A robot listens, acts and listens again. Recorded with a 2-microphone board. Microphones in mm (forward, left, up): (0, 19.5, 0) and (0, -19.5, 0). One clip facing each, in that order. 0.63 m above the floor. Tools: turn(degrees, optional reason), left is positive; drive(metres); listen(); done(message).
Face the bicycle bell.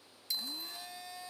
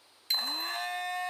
turn(degrees=-55, reason="The bicycle bell: about 55° right or 125° right.")
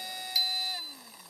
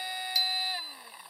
listen()
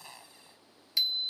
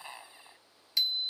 done("Found it: a bicycle bell, straight ahead.")